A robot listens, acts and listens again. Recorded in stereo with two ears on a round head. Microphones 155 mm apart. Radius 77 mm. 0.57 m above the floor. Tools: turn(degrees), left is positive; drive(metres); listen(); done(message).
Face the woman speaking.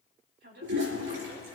turn(degrees=-65)
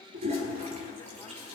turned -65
listen()
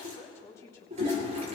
turn(degrees=20)
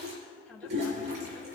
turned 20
done("Found it: a woman speaking, straight ahead, over 4 m away.")